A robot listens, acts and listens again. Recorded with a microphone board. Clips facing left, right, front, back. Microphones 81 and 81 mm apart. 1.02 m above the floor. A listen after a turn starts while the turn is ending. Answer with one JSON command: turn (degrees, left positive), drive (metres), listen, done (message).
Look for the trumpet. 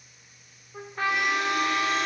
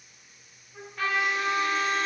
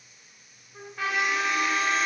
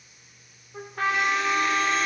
{"turn": 145}
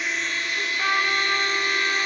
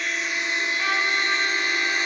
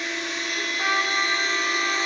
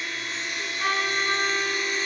{"turn": 35}
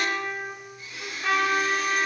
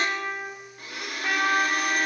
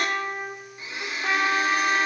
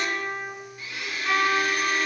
{"done": "Found it: a trumpet, straight ahead."}